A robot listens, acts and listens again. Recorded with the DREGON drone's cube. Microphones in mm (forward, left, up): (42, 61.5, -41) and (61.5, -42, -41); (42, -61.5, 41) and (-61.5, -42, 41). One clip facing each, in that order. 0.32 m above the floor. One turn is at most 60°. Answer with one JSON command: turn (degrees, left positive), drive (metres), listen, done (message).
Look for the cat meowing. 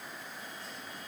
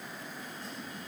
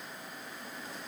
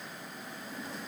{"listen": true}
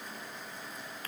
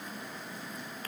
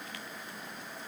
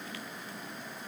{"listen": true}
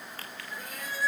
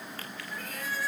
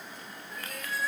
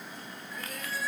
{"turn": 30}
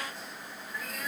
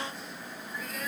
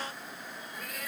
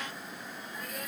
{"turn": 10}
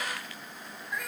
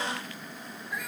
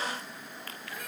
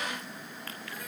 {"turn": 10}
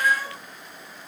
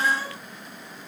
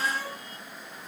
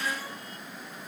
{"done": "Facing the cat meowing."}